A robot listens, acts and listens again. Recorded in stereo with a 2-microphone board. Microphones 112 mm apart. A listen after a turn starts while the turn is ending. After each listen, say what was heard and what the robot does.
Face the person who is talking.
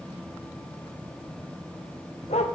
Keep listening.
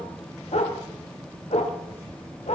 Keep listening.
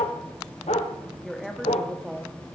Turn 30° left.
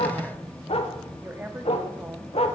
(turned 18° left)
So it is at 15° right. Turn 15° right.
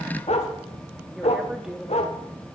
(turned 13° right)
Found it: a woman speaking, straight ahead, 1 to 2 m away.